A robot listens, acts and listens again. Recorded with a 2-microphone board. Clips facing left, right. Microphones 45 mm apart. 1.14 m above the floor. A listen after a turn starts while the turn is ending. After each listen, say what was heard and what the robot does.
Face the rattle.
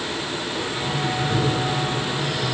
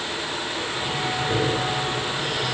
Keep listening.
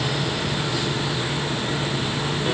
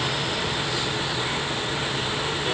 Keep listening.
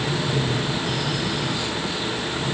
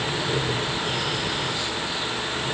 I can't make out a rattle to turn to.